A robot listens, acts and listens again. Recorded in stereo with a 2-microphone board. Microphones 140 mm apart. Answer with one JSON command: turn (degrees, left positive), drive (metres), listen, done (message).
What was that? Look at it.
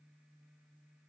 {"listen": true}
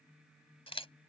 {"turn": 40}
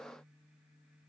{"listen": true}
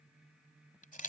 {"turn": 100}
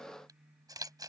{"turn": -30}
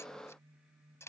{"turn": 20}
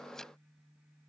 {"listen": true}
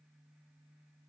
{"listen": true}
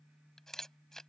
{"done": "Facing the camera shutter."}